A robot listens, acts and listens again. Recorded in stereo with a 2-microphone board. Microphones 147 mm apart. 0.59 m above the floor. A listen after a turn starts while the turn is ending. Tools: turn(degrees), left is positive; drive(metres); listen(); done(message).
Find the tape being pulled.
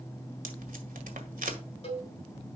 turn(degrees=-90)
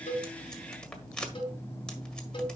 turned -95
done("Facing the tape being pulled.")